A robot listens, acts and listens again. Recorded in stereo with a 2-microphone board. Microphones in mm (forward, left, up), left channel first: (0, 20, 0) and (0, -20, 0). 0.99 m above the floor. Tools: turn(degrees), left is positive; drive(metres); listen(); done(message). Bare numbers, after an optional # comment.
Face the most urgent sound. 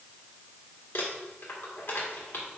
listen()
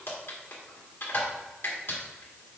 listen()
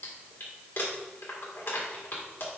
done("I can't make out anything urgent to turn to.")